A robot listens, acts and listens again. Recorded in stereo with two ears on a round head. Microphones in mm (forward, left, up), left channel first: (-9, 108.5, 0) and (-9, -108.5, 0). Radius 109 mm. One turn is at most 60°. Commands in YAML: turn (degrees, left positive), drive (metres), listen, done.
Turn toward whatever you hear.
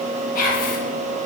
turn: 35
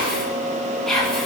done: "Found it: whispering, straight ahead, 1 to 2 m away."